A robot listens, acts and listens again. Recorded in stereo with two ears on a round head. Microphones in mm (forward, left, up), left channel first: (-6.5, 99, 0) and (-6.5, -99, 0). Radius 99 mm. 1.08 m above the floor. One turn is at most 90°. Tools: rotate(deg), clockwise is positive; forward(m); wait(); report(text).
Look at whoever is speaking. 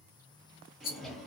wait()
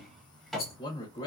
rotate(-35)
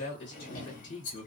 rotate(-90)
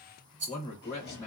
rotate(-15)
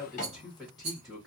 report("Found it: a man speaking, straight ahead.")